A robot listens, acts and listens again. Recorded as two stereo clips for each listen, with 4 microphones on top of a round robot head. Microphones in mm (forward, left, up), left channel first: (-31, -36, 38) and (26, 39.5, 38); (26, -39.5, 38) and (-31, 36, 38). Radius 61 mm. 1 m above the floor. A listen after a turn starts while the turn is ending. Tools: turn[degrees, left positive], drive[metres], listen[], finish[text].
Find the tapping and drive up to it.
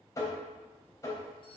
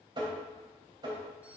Thought: The tapping: 175° left.
Action: turn[175]
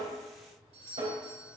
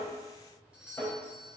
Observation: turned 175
Thought: The tapping is now 20° left.
Action: turn[20]
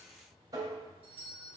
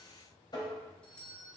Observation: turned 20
Action: drive[1.0]
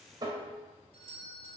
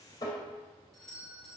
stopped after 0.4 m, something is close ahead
Action: finish[Something is in my way. I am facing the tapping but have not reached it.]